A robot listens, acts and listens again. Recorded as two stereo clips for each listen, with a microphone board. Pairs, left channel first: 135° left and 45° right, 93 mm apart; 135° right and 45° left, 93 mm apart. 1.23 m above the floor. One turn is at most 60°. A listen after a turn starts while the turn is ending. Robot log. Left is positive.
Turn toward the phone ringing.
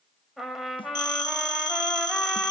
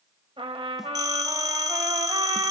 note: The phone ringing: 90° left.
cmd yaw +60
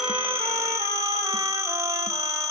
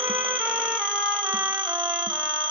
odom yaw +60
note: The phone ringing is now 10° left.
cmd yaw +10
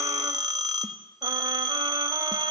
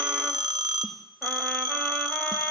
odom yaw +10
end: Facing the phone ringing, 2 to 4 m away.